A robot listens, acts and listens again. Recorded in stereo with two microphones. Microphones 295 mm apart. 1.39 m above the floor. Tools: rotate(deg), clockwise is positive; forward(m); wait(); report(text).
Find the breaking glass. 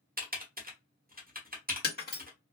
rotate(-30)
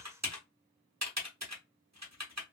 wait()
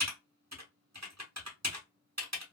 report("I heard breaking glass, but can't make it out now. It was about straight ahead or 120° left.")